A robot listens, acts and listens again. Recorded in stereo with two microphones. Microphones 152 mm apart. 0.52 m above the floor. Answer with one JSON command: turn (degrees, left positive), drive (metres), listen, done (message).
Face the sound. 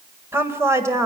{"turn": -20}
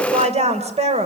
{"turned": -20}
{"turn": -135}
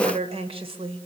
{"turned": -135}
{"turn": -35}
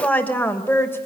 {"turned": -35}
{"turn": 15}
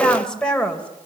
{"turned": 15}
{"done": "Found it: a woman speaking, straight ahead."}